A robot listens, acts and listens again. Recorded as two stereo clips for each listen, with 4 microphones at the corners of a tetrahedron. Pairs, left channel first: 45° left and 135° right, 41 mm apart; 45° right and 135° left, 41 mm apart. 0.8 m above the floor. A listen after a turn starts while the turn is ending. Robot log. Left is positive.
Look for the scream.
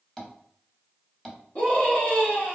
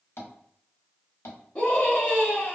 note: The scream: 15° left.
cmd yaw +15
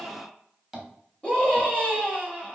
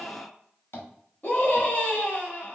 end: Found it: a scream, straight ahead.